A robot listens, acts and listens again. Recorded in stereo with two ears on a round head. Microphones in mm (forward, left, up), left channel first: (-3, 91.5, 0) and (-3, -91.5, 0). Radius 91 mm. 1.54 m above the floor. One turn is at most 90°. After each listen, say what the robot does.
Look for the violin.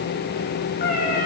Keep listening.
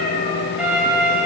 Turn 30° right.
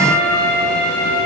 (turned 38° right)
Turn 90° right.
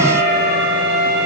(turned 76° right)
Turn 65° right.
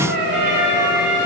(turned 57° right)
Facing the violin.